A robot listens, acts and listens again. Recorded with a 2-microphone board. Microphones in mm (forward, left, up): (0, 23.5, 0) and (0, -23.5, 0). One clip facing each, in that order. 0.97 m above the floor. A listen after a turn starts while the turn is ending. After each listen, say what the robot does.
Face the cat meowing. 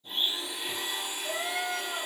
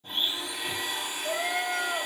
Turn 40° right.
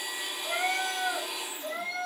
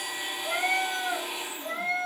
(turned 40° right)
Turn 40° right.
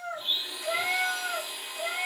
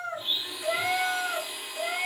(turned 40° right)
Turn 30° right.
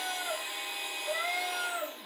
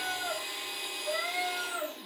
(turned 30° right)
Turn 10° right.
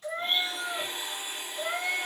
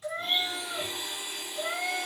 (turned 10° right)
Found it: a cat meowing, straight ahead.